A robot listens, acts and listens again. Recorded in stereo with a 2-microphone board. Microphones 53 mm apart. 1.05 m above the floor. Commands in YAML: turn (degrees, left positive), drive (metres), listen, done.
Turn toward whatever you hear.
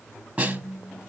turn: -30
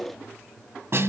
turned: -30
turn: -120
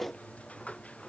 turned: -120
listen: true
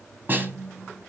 turn: -45
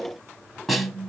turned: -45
done: "Found it: a snare drum, straight ahead."